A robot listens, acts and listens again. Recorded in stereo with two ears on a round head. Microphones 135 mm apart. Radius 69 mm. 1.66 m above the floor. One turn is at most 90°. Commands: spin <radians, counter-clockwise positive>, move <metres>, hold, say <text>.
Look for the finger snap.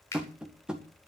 spin 0.35
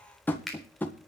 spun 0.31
say Found it: a finger snap, straight ahead.